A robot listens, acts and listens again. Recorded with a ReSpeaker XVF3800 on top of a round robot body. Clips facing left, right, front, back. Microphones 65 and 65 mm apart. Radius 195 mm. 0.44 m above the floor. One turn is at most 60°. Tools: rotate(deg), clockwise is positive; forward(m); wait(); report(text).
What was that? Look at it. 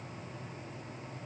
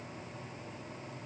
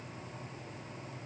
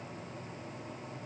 wait()
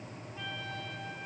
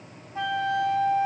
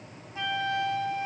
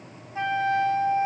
rotate(60)
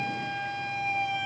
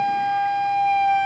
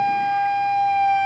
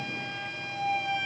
rotate(50)
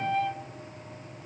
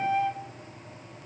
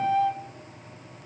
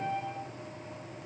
rotate(10)
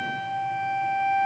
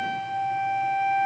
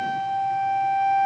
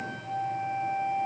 report("Facing the flute, 1 to 2 m away.")